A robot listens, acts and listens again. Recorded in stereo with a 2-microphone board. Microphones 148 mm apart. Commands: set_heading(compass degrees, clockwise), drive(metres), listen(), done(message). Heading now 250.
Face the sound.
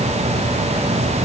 listen()
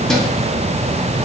listen()
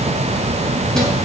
done("I can't make out anything to turn to.")